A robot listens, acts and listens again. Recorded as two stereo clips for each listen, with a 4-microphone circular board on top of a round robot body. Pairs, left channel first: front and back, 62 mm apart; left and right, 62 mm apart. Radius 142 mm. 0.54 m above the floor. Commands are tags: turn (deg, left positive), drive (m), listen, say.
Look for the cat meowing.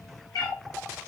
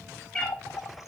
<turn deg="20"/>
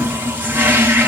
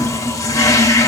<listen/>
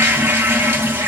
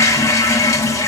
<listen/>
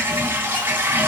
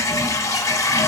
<say>Facing where the cat meowing came from. I can't hear it now.</say>